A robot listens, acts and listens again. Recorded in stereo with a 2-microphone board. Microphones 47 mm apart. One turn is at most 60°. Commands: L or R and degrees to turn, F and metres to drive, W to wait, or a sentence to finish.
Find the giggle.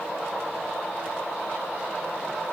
W
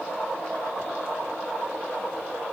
W
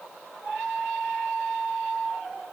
I can't make out a giggle to turn to.